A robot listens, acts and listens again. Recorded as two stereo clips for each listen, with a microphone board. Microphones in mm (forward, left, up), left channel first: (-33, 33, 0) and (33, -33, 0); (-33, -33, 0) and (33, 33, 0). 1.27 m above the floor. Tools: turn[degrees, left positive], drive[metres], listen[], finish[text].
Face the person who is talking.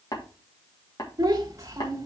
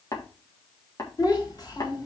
Thought: The child speaking: 100° right.
Action: turn[-100]
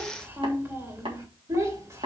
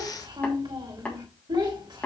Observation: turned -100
Thought: The child speaking is now 10° left.
Action: turn[10]
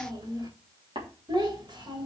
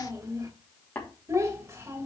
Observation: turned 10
Thought: The child speaking is now 15° right.
Action: turn[-15]
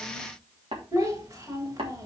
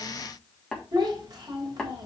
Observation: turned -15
Action: finish[Facing the child speaking.]